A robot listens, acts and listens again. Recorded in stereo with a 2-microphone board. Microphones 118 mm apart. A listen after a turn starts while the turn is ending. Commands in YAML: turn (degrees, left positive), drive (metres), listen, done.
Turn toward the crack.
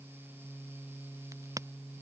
turn: -30
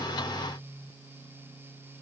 listen: true
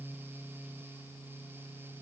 done: "I heard a crack, but can't make it out now. It was about straight ahead or 120° right."